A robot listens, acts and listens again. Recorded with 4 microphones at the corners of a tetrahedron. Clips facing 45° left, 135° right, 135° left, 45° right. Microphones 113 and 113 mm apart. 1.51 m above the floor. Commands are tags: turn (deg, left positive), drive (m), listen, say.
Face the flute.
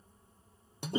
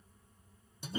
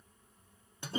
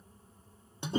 <listen/>
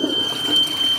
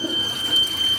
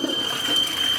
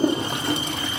<listen/>
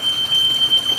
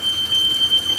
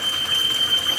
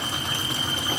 <say>I can't make out a flute, only a toilet flushing and a fire alarm.</say>